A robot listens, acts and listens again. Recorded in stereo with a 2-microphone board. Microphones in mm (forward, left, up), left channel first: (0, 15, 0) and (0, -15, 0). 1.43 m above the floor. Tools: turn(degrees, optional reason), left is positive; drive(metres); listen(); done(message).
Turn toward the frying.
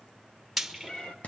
turn(degrees=-30)
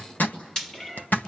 turn(degrees=20, reason="So it is at 20° left.")
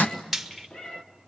done("Facing the frying.")